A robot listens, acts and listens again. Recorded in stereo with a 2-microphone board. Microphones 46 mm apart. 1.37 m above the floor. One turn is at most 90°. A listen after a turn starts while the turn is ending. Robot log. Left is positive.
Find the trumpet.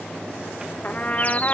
note: The trumpet: about 35° left or 145° left.
cmd yaw +35
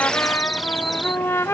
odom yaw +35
note: So it is at 110° left.
cmd yaw +90
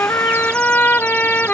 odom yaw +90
note: The trumpet is now 40° left.
cmd yaw +40
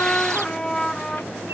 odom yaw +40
note: The trumpet is now 20° left.
cmd yaw +20
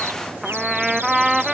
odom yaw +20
note: The trumpet is now 10° right.
cmd yaw -10
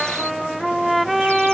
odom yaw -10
end: Found it: a trumpet, straight ahead.